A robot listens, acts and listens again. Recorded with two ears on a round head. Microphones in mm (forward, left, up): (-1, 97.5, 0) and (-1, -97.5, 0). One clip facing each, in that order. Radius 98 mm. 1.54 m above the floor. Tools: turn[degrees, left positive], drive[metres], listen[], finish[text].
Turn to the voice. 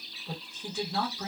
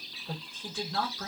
Action: turn[30]
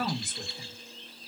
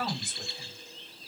Thought: So it is at 140° left.
Action: turn[140]
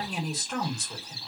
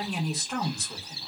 Action: finish[Found it: a woman speaking, straight ahead.]